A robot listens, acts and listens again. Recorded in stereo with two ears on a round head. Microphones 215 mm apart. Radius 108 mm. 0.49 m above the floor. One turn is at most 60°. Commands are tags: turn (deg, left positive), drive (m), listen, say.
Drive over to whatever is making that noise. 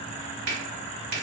<turn deg="-55"/>
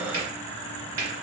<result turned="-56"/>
<turn deg="-15"/>
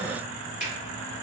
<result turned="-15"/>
<drive m="1.0"/>
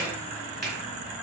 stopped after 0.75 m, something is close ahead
<say>I am next to the finger snap.</say>